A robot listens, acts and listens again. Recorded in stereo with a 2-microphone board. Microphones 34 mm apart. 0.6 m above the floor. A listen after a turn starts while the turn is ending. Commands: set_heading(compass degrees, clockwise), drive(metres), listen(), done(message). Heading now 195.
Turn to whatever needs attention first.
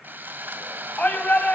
set_heading(145)
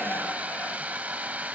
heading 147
listen()
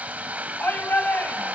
set_heading(67)
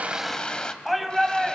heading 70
done("Facing the shout, over 4 m away.")